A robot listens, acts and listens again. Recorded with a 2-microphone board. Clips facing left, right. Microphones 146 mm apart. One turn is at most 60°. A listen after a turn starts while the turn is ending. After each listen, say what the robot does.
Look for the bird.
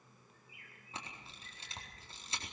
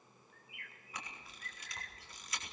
Turn 60° right.
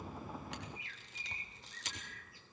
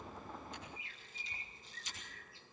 Turn 30° right.
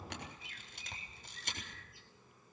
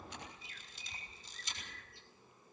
Found it: a bird, straight ahead, 2 to 4 m away.